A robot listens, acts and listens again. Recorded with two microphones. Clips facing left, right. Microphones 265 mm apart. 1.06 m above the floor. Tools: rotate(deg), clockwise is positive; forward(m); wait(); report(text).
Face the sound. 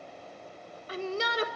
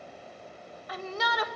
rotate(-30)
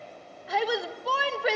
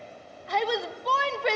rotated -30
report("Facing the shout, 1 to 2 m away.")